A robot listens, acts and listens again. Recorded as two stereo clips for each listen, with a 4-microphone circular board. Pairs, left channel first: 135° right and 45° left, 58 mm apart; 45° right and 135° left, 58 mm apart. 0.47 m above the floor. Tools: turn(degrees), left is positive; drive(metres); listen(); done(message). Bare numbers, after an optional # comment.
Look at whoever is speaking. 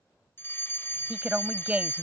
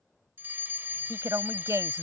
# The woman speaking: 110° left.
turn(110)
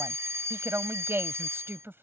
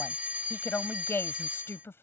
done("Found it: a woman speaking, straight ahead.")